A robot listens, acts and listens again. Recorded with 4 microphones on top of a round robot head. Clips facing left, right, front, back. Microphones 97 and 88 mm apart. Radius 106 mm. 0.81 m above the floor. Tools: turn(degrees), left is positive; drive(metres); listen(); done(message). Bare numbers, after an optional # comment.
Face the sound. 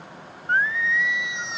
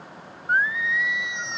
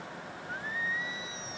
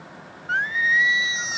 # The singing: 175° left.
turn(175)
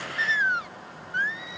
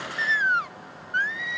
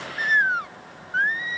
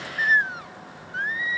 # The singing is now 60° right.
turn(-60)
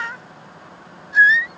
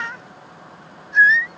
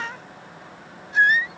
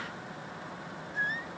done("Found it: singing, straight ahead.")